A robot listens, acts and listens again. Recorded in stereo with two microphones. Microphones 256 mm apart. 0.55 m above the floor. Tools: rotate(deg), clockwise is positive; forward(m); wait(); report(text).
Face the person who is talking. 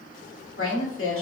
rotate(-55)
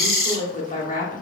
rotate(-35)
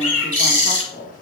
rotate(-35)
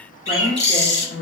rotate(-45)
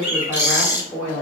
rotate(-20)
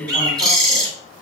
rotate(-10)
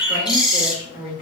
report("Found it: a woman speaking, straight ahead.")